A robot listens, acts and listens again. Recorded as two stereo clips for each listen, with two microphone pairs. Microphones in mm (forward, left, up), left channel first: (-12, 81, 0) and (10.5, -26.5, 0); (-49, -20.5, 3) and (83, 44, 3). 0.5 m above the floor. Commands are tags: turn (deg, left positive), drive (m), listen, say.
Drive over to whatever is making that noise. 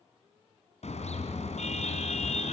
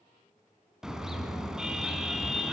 <turn deg="110"/>
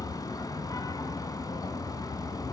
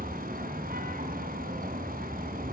<turn deg="45"/>
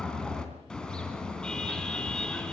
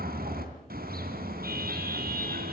<turn deg="20"/>
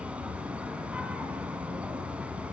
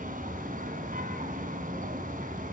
<drive m="1.0"/>
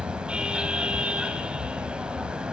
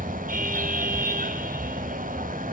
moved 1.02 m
<drive m="1.0"/>
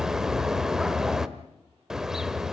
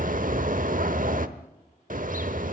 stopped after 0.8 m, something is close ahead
<say>I am next to the car horn.</say>